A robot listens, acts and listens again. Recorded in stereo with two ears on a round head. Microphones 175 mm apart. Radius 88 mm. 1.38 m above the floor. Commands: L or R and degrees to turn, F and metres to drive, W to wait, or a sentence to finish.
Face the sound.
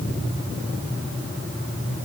W
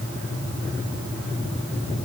W
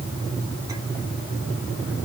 I can't make out anything to turn to.